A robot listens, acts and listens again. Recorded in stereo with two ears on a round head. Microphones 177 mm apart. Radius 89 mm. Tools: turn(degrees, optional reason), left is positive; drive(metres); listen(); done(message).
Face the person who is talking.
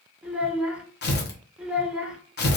turn(degrees=-30)
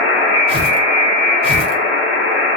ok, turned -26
listen()
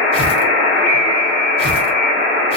listen()
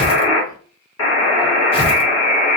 done("I heard a child speaking, but can't make it out now. It was about 20° left or 150° right.")